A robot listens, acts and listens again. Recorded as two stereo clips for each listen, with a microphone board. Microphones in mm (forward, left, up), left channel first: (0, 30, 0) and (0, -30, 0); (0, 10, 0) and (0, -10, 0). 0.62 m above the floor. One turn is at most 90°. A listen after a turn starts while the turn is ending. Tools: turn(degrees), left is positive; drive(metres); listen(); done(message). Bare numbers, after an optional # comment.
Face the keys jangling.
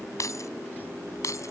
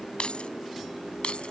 # The keys jangling: about 60° left or 120° left.
turn(60)
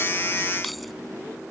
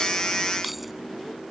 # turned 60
listen()
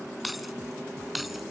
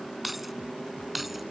done("Found it: keys jangling, straight ahead.")